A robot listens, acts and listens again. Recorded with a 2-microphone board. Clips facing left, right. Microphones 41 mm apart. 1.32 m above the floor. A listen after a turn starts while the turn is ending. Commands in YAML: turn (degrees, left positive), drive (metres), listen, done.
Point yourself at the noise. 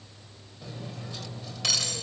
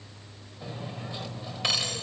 turn: -25
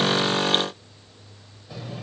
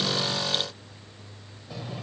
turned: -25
done: "Found it: cutlery clinking, straight ahead, 2 to 4 m away."